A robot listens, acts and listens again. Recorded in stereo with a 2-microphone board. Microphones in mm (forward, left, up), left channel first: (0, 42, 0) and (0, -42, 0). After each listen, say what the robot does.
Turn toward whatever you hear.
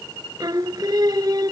Turn 50° right.
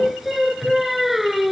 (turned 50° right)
Facing the singing.